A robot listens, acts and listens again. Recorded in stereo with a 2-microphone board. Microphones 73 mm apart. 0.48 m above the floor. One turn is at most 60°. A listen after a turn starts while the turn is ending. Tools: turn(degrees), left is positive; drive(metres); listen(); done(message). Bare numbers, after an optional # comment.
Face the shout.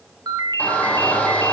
# The shout: about 20° left or 160° left.
turn(20)
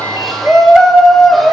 done("Found it: a shout, straight ahead, 2 to 4 m away.")